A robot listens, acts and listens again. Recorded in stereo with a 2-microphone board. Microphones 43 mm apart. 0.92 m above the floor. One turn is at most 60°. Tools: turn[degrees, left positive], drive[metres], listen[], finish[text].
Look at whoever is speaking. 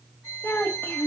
Thought: The child speaking: about 60° left or 120° left.
Action: turn[60]
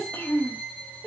Thought: So it is at 60° left.
Action: turn[60]
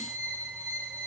Action: listen[]
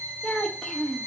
Thought: The child speaking is now 10° left.
Action: turn[10]
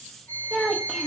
Action: finish[Found it: a child speaking, straight ahead, under 1 m away.]